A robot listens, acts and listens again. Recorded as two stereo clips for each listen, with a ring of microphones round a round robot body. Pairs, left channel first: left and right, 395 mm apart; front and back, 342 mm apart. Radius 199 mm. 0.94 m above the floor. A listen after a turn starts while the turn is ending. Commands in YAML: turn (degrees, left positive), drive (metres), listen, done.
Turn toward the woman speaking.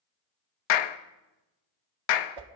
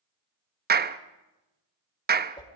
listen: true
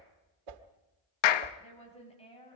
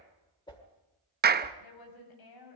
turn: 15
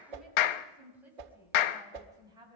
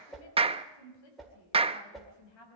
turn: -10
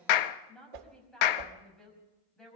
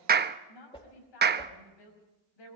done: "Found it: a woman speaking, straight ahead."